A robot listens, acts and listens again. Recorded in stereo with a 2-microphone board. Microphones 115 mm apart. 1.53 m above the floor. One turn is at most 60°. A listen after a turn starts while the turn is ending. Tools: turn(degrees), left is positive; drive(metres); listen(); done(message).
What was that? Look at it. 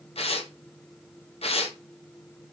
turn(degrees=60)
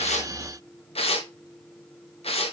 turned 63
turn(degrees=60)
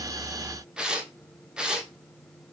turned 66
turn(degrees=-10)
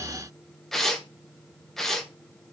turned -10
done("Facing the tearing paper.")